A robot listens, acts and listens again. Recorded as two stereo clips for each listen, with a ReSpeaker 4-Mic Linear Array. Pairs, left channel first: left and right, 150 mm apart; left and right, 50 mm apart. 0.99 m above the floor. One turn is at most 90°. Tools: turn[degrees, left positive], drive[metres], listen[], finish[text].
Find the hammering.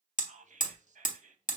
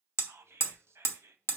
Thought: The hammering: about 60° left or 120° left.
Action: turn[60]
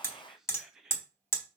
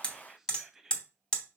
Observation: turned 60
Thought: So it is at 20° left.
Action: turn[20]
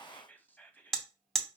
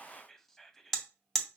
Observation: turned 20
Action: finish[Found it: hammering, straight ahead.]